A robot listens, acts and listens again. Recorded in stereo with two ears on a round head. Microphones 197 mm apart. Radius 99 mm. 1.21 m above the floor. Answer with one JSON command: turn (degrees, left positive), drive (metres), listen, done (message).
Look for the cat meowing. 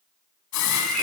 {"turn": 30}
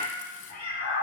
{"turn": 140}
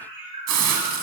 {"turn": -25}
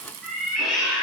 {"done": "Found it: a cat meowing, straight ahead."}